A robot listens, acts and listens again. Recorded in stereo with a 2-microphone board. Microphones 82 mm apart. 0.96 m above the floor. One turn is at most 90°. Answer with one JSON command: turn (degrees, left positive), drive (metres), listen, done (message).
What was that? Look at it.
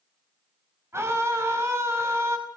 {"turn": -35}
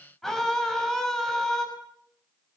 {"done": "Found it: a scream, straight ahead, over 4 m away."}